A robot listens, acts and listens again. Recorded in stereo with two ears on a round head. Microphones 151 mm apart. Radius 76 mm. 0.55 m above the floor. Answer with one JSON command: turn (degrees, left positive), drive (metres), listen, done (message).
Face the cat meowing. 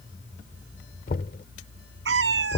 {"turn": -90}
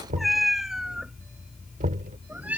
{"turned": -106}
{"turn": -10}
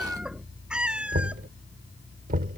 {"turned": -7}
{"done": "Found it: a cat meowing, straight ahead."}